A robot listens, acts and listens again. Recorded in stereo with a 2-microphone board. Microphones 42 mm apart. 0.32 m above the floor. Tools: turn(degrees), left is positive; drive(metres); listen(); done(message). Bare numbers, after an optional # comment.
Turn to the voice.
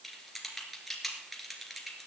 listen()
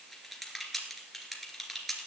listen()
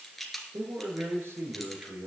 turn(-90)
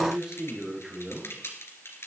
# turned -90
# So it is at 10° right.
turn(-10)
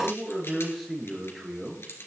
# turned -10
done("Facing the man speaking, over 4 m away.")